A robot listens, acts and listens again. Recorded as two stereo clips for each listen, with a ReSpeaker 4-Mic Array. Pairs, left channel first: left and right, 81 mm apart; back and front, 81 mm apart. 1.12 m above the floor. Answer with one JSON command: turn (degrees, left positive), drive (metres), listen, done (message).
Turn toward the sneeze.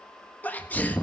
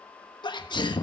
{"turn": 160}
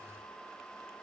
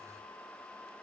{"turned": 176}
{"turn": -15}
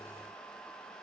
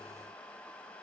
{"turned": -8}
{"turn": -10}
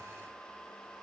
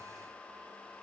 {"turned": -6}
{"done": "I heard a sneeze from this way, but can't make it out now."}